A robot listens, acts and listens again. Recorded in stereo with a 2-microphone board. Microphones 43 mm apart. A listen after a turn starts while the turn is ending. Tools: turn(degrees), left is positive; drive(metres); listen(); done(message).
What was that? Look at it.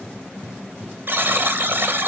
turn(degrees=-50)
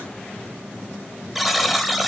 done("Found it: a buzzer, straight ahead, 1 to 2 m away.")